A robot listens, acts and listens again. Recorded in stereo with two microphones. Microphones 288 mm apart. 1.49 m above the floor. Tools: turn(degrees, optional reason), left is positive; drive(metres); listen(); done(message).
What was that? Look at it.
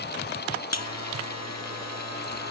turn(degrees=65, reason="The buzzer: about 65° left or 115° left.")
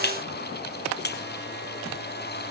turn(degrees=40, reason="So it is at 40° left.")
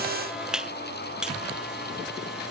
done("Facing the buzzer.")